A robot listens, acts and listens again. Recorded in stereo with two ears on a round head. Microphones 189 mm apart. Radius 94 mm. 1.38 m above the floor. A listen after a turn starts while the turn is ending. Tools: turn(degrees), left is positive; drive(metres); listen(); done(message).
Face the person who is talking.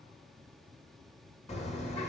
listen()
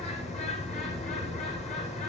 listen()
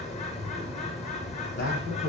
turn(degrees=55)
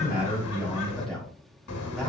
done("Found it: a man speaking, straight ahead, over 4 m away.")